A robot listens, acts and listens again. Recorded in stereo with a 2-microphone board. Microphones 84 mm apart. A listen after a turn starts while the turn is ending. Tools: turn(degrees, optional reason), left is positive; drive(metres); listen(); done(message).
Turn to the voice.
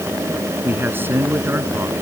turn(degrees=-25, reason="The man speaking: about 25° right or 155° right.")
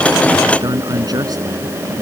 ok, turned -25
turn(degrees=-130, reason="So it is at 130° right.")
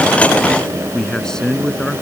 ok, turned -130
turn(degrees=10, reason="The man speaking is now 10° left.")
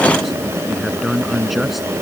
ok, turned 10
done("Found it: a man speaking, straight ahead.")